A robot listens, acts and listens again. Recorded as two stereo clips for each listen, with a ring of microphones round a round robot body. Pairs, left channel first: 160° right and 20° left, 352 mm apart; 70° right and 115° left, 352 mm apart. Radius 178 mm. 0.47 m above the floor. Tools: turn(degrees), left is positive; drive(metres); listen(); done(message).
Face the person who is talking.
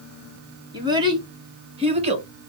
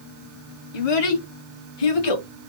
turn(degrees=-50)
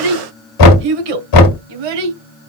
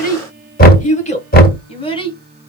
turn(degrees=10)
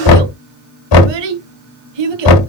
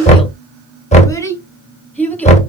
turn(degrees=20)
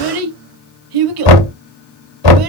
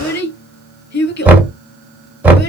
done("Facing the child speaking.")